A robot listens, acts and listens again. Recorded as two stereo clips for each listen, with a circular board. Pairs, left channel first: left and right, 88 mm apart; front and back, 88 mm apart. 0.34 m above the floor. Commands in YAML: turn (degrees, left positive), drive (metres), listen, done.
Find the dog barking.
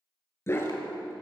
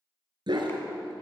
turn: 150
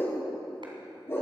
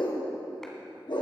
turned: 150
turn: 30
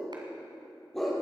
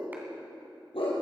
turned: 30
done: "Facing the dog barking, over 4 m away."